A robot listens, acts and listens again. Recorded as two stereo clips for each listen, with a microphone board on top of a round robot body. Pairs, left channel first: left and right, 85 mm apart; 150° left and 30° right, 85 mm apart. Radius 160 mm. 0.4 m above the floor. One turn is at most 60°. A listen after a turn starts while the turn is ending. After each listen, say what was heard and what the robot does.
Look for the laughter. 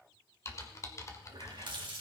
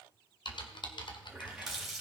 Keep listening.
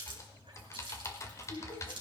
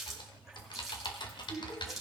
The laughter: 85° left. Turn 60° left.
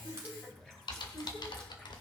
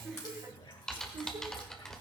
Facing the laughter, over 4 m away.